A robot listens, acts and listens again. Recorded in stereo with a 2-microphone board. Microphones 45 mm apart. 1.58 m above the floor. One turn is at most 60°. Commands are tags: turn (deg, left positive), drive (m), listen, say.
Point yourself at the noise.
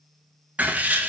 <turn deg="-35"/>
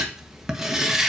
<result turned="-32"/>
<turn deg="-15"/>
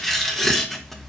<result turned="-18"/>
<say>Found it: writing, straight ahead.</say>